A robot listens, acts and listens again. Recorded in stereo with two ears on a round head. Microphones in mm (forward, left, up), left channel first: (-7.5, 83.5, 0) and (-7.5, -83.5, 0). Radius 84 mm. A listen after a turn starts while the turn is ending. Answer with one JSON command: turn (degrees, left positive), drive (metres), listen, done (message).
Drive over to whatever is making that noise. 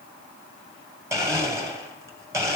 {"turn": -15}
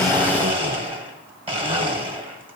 {"turn": -150}
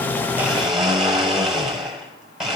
{"drive": 1.0}
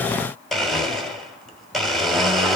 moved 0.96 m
{"drive": 1.0}
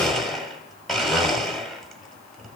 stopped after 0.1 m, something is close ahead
{"done": "I am next to the blender."}